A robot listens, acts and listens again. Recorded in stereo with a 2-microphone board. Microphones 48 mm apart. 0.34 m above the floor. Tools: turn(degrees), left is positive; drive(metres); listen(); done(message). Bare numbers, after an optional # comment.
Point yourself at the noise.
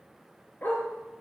# The dog barking: about 40° left or 140° left.
turn(40)
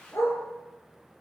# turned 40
# So it is at 90° left.
turn(90)
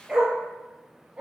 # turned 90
# The dog barking is now 20° right.
turn(-20)
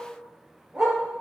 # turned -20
# The dog barking is now 10° right.
turn(-10)
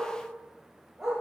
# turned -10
# The dog barking is now 10° right.
turn(-10)
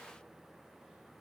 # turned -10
listen()
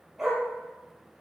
done("Facing the dog barking.")